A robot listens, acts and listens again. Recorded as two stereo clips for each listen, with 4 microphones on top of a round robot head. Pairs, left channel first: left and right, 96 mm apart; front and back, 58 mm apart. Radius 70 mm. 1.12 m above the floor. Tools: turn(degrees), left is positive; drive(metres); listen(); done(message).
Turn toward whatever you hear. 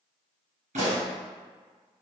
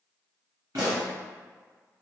turn(degrees=-110)
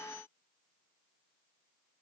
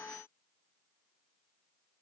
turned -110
done("Facing where the pop came from. I can't hear it now.")